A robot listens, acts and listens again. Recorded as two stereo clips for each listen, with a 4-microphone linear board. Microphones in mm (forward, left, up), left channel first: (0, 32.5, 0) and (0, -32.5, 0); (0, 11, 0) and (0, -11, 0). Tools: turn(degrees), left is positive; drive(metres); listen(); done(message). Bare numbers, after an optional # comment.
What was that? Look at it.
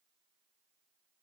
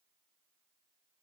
listen()
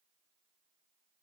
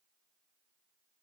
listen()
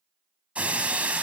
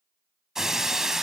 # The breaking glass: about 20° right or 160° right.
turn(-20)
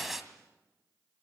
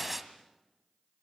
done("Found it: breaking glass, straight ahead.")